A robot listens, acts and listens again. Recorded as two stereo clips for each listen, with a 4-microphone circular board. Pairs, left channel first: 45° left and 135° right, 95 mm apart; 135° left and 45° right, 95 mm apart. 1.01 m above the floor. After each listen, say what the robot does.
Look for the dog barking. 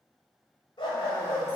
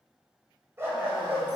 Turn 15° left.
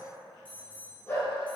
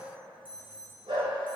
Turn 25° right.
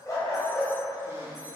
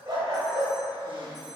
Turn 15° right.
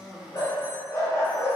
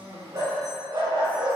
Turn 15° right.
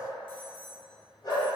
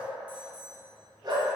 Found it: a dog barking, straight ahead, 2 to 4 m away.